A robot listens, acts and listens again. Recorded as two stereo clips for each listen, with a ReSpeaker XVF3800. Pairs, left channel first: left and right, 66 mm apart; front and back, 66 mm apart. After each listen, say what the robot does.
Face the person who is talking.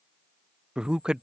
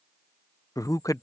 Turn 15° right.
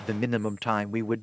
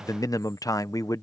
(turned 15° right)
Found it: a man speaking, straight ahead.